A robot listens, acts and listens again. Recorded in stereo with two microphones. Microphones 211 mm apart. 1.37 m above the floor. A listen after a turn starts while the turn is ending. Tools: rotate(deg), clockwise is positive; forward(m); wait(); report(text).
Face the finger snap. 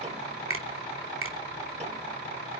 rotate(90)
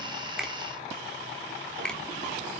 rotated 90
report("Facing the finger snap.")